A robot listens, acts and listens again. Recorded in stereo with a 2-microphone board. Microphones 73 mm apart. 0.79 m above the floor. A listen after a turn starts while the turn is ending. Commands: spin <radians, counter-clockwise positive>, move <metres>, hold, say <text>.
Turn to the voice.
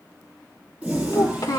spin 1.13
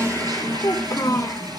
spin 0.79
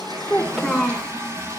say Facing the child speaking.